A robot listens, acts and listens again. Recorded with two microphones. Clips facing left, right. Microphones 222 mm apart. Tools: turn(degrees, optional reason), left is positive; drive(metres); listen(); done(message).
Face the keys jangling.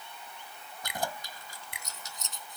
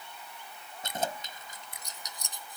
turn(degrees=-20, reason="The keys jangling: about 20° right or 160° right.")
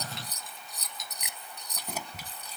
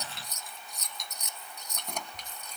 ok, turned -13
turn(degrees=30)
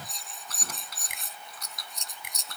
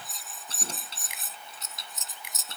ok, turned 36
turn(degrees=-25, reason="So it is at 25° right.")
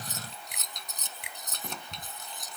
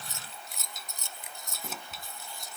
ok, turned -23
done("Facing the keys jangling.")